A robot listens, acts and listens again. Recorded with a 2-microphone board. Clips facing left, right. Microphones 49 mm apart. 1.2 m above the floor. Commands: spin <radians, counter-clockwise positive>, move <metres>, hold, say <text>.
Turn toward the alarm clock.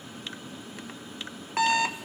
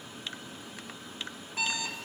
spin 1.22
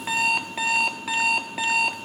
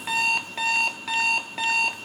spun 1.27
say Facing the alarm clock, 1 to 2 m away.